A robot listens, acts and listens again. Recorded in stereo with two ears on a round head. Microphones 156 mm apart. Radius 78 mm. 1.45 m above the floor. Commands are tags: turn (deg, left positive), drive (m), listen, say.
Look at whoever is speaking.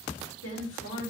<turn deg="90"/>
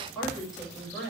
<say>Found it: a woman speaking, straight ahead, over 4 m away.</say>